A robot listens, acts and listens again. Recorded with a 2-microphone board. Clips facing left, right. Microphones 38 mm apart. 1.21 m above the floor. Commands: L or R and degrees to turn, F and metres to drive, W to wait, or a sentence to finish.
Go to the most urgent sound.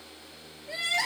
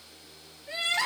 R60
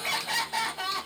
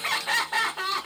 R50
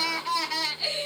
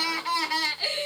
R10
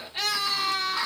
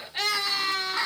F1.0
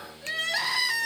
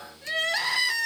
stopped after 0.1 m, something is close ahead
Something is in my way. I am facing the crying but have not reached it.